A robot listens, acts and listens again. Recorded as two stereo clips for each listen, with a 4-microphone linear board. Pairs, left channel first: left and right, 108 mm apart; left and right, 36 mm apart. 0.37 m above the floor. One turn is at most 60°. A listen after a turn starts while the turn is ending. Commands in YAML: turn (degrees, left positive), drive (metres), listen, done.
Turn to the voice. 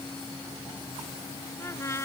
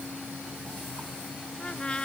listen: true
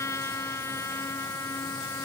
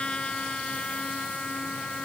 listen: true
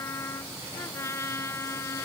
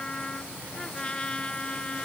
done: "I can't make out anyone speaking to turn to."